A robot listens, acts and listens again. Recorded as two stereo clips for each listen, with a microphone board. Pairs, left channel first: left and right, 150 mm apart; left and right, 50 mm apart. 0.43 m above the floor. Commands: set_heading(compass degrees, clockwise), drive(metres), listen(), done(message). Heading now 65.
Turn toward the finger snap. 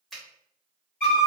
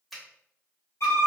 set_heading(35)
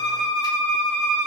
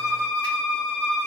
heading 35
listen()
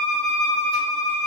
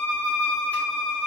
listen()
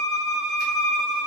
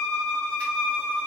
done("I heard a finger snap, but can't make it out now. It was about 30° right or 150° left.")